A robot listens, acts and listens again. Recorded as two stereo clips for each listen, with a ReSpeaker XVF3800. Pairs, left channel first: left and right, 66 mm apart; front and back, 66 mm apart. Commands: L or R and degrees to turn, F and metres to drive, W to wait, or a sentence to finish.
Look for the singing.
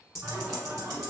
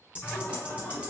R70
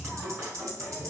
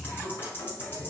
R15
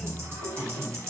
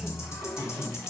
Found it: singing, straight ahead.